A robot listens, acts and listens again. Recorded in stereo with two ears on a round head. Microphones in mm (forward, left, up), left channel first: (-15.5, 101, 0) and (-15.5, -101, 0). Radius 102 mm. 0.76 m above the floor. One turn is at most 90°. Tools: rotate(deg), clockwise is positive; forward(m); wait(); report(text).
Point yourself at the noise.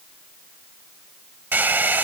rotate(30)
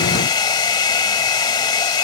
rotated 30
rotate(-20)
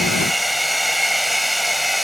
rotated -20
report("Found it: a hair dryer, straight ahead.")